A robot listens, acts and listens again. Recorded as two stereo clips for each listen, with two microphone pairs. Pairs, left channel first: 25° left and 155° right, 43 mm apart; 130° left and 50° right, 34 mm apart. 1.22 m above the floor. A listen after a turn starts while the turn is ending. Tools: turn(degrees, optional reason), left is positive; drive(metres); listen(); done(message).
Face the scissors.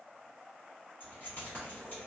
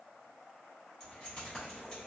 listen()
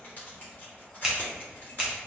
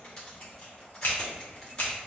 turn(degrees=120, reason="The scissors: 120° left.")
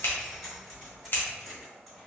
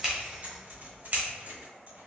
turn(degrees=-15, reason="The scissors is now 15° right.")
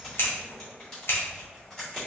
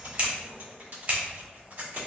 done("Facing the scissors.")